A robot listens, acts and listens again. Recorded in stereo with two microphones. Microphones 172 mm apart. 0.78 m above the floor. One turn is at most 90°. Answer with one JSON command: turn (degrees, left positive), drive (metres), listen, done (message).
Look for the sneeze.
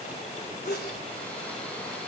{"turn": 75}
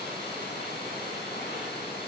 {"listen": true}
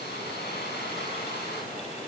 {"done": "I heard a sneeze, but can't make it out now. It was about straight ahead or 30° left."}